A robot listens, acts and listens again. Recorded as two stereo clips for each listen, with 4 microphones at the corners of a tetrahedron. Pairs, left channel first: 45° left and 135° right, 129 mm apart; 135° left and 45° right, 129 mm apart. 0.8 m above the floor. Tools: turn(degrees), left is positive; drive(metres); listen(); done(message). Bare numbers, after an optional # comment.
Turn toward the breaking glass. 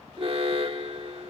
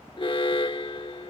listen()
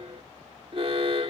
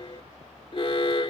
listen()
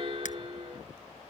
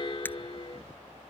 # The breaking glass: 60° left.
turn(60)
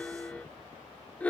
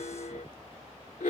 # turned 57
done("Facing where the breaking glass came from. I can't hear it now.")